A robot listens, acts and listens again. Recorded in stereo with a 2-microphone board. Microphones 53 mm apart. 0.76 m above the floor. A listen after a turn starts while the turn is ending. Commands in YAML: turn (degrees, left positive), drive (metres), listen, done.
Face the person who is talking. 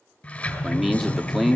turn: 30
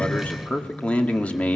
turn: 150
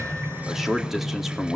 done: "Facing the man speaking, 2 to 4 m away."